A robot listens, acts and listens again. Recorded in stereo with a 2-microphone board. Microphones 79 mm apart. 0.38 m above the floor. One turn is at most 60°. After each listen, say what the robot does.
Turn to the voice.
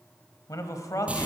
Turn 45° left.
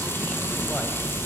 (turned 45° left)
Keep listening.
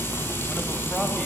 Keep listening.
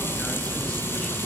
I heard a man speaking, but can't make it out now. It was about straight ahead or 90° left.